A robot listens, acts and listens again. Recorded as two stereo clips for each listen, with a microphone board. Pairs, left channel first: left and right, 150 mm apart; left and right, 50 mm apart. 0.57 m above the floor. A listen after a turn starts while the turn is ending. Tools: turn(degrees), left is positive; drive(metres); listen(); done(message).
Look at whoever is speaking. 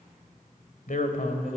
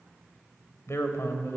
turn(degrees=65)
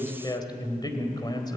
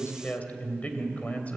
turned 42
turn(degrees=30)
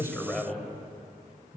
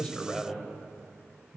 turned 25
done("Facing the man speaking.")